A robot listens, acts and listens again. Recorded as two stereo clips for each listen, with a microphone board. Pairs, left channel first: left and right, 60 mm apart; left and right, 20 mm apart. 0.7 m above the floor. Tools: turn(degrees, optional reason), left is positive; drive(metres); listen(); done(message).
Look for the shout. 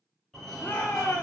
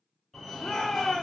turn(degrees=35, reason="The shout: about 35° left or 145° left.")
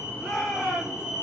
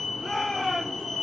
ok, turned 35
done("Facing the shout.")